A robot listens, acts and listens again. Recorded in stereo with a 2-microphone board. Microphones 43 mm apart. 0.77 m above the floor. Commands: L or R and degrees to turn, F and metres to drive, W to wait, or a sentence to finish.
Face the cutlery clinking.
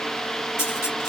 L90
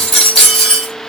Found it: cutlery clinking, straight ahead.